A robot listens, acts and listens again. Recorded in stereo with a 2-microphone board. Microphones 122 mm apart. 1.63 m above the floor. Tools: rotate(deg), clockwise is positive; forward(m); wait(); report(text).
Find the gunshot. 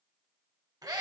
wait()
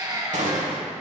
rotate(90)
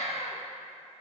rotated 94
report("I heard a gunshot from this way, but can't make it out now.")